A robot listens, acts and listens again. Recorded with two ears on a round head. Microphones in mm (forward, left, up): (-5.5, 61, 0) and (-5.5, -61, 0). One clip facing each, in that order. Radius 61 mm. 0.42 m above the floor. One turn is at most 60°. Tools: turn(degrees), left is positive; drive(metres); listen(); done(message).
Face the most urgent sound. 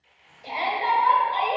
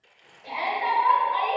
turn(degrees=35)
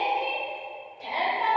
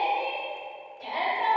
done("Facing the shout, 1 to 2 m away.")